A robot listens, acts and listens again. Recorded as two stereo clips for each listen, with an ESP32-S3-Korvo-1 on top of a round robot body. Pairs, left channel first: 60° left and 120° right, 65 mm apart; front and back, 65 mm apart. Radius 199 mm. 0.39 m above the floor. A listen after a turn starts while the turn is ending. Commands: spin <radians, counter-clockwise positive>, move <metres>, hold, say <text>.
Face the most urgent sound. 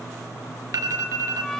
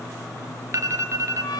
spin -2.53
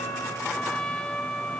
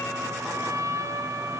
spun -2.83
spin 0.35
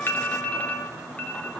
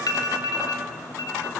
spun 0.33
say Found it: an alarm, straight ahead.